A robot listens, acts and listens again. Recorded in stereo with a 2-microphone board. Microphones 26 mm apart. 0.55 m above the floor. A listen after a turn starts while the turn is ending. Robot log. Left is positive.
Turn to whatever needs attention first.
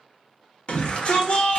note: The shout: about 55° left or 125° left.
cmd yaw +55
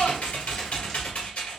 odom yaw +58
cmd idle
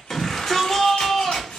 note: So it is at 10° left.
cmd yaw +10
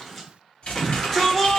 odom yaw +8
end: Found it: a shout, straight ahead, 1 to 2 m away.